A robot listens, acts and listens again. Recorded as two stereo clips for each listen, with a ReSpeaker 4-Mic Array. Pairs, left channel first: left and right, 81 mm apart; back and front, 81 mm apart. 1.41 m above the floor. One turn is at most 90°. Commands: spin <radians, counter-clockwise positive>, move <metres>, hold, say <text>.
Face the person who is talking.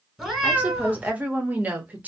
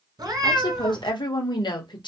spin -1.57
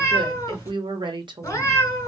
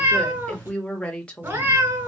spin -1.57
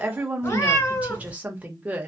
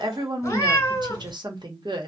spin -0.26
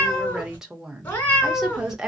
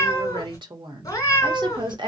spin -0.17
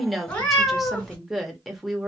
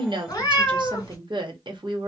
say Facing the woman speaking.